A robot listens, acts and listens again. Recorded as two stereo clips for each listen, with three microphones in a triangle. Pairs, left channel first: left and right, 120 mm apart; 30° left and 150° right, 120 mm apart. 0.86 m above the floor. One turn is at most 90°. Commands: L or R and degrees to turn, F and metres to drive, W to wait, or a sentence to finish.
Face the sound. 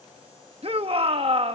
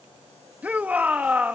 R75
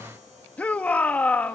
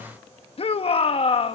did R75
L15
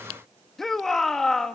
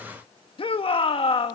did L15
Found it: a shout, straight ahead, 1 to 2 m away.